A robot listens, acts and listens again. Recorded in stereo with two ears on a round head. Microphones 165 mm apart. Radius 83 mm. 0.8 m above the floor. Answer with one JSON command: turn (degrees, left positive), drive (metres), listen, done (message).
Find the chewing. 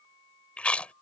{"turn": 30}
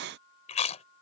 {"turn": 145}
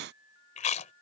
{"turn": 40}
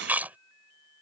{"turn": -10}
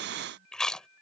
{"done": "Facing the chewing."}